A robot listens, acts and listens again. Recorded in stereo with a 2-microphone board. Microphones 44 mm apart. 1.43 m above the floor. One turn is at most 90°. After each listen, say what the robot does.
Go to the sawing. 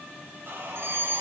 Turn 55° right.
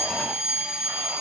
Keep listening.
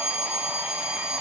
Keep listening.
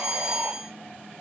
I heard sawing, but can't make it out now. It was about straight ahead or 70° right. I did not reach it.